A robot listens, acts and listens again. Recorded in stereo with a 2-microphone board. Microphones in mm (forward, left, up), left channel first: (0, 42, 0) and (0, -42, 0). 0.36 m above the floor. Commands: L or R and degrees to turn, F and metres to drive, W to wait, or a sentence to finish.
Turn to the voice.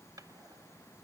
W
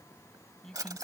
L30
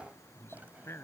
L145
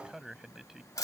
Found it: a man speaking, straight ahead.